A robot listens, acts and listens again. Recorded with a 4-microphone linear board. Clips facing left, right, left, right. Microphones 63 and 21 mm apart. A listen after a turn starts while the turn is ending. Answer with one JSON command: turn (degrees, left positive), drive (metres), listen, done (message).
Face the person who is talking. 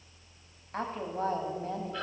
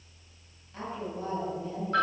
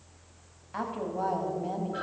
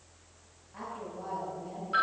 {"turn": 60}
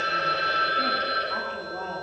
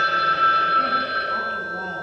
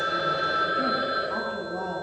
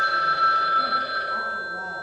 {"listen": true}
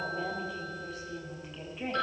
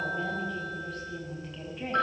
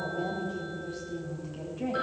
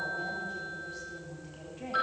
{"done": "Found it: a woman speaking, straight ahead, 2 to 4 m away."}